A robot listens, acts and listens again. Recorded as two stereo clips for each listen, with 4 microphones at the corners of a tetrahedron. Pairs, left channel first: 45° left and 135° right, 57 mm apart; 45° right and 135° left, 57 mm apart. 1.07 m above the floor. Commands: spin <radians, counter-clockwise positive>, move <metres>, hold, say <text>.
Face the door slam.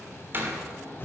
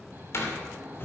spin -1.48
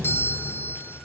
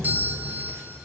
say Facing where the door slam came from. I can't hear it now.